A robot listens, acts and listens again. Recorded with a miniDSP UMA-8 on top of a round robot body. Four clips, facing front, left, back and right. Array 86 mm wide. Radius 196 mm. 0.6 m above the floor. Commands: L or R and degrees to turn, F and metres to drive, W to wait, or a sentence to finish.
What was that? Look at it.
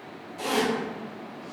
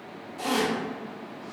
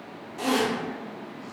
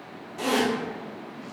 R120
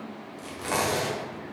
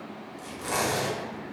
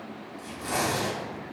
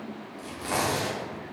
R20
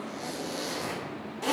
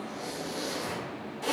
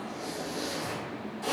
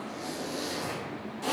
Found it: a zipper, straight ahead.